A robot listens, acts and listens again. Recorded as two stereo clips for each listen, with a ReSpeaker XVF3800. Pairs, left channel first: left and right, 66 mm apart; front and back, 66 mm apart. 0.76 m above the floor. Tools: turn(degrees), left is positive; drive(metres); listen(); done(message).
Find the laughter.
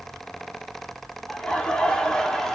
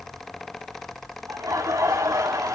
turn(degrees=170)
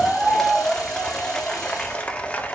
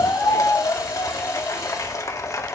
turn(degrees=25)
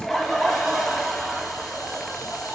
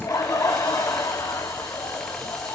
done("Found it: laughter, straight ahead.")